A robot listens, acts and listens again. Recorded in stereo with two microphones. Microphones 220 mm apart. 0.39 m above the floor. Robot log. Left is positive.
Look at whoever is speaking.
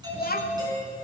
note: The child speaking: about 45° left or 135° left.
cmd yaw +45
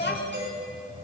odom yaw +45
note: So it is at 75° left.
cmd yaw +75
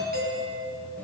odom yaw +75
cmd idle
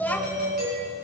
note: The child speaking is now 10° left.
cmd yaw +10
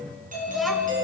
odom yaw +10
cmd idle
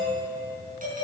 cmd idle
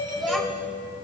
end: Found it: a child speaking, straight ahead.